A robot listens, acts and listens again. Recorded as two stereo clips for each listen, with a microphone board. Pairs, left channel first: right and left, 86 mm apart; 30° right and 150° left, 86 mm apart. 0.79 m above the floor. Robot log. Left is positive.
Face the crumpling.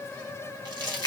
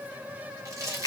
note: The crumpling: 105° left.
cmd yaw +105
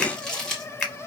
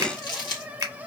note: The crumpling is now 10° right.
cmd yaw -10
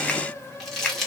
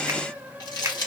end: Found it: crumpling, straight ahead.